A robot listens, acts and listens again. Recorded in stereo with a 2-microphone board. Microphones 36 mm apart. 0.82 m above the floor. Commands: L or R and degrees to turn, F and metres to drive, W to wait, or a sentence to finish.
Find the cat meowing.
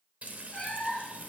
L45
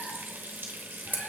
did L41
W
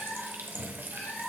L105
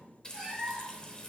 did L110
Found it: a cat meowing, straight ahead.